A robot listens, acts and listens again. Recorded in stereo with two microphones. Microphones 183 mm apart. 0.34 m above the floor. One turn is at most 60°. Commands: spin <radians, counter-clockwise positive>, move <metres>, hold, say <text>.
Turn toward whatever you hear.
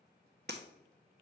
spin -1.05
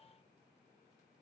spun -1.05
hold
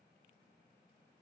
say I heard breaking glass, but can't make it out now. It was about 5° right or 55° right.